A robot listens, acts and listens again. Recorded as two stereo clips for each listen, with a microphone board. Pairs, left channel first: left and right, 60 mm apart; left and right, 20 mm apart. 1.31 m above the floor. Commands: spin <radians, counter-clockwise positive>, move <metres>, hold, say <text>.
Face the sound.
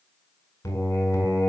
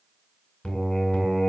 spin 1.22
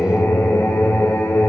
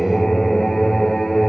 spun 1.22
spin 0.61
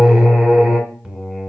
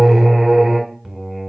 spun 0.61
spin -0.35
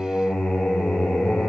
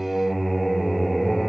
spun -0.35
say Facing the singing.